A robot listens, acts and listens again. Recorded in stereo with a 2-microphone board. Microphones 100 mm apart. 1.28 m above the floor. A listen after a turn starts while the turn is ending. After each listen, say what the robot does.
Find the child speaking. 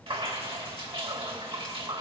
Keep listening.
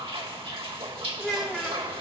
Turn 30° right.
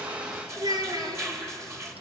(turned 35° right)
Turn 135° right.
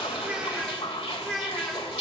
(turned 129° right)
Facing the child speaking, over 4 m away.